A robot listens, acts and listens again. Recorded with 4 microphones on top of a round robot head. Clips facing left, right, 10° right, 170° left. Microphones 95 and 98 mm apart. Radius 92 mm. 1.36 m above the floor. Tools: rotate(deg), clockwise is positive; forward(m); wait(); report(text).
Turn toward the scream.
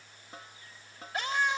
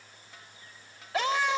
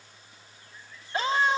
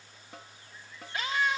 rotate(75)
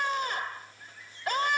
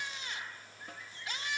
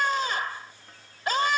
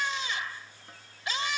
rotate(-35)
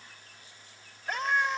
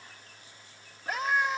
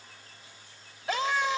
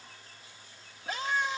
report("Found it: a scream, straight ahead.")